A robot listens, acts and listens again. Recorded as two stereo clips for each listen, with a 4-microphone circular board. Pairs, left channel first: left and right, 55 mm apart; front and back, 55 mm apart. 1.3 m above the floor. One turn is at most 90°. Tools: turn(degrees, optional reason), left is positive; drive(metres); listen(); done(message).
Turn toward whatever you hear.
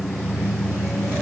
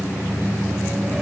listen()
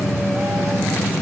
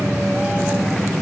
listen()
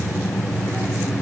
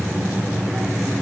done("I can't make out anything.")